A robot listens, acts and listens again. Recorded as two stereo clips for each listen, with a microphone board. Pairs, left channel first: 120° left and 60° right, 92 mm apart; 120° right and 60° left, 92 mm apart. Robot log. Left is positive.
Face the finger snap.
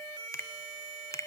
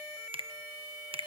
note: The finger snap: 65° left.
cmd yaw +65
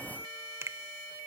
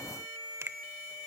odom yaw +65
end: Found it: a finger snap, straight ahead.